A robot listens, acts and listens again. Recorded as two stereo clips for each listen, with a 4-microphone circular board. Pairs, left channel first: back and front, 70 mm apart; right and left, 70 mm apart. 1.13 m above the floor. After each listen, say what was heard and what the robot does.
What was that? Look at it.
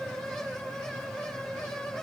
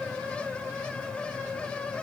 Keep listening.
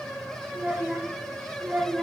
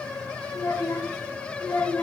The child speaking: 65° right. Turn 65° right.
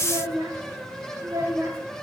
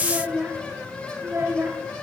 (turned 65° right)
The child speaking is now 40° left. Turn 40° left.
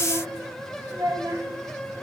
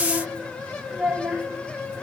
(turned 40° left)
The child speaking is now 10° left. Turn 10° left.
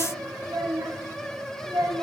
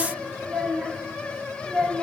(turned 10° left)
Found it: a child speaking, straight ahead, 1 to 2 m away.